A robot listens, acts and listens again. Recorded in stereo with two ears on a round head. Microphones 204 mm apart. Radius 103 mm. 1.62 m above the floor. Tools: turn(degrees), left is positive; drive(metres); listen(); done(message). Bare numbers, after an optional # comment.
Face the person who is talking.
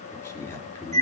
turn(30)
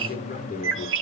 # So it is at 140° left.
turn(140)
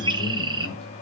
listen()
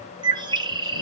listen()
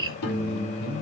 # The man speaking is now 50° left.
turn(50)
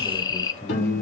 # The man speaking is now 10° left.
turn(10)
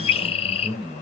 done("Facing the man speaking, over 4 m away.")